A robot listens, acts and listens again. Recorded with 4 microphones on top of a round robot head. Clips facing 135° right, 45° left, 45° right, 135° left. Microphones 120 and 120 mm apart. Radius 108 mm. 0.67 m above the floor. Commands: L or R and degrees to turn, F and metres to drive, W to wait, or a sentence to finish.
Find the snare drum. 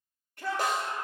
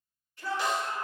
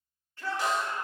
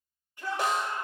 L175
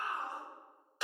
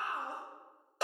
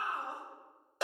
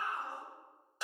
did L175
R10
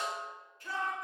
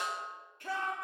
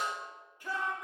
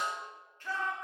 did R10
Facing the snare drum.